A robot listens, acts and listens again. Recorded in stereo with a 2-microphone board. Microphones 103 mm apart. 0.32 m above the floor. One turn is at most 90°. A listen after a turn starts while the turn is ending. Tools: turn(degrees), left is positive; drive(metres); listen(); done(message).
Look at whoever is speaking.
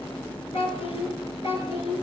turn(degrees=75)
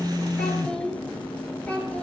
turn(degrees=15)
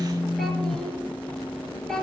done("Found it: a child speaking, straight ahead.")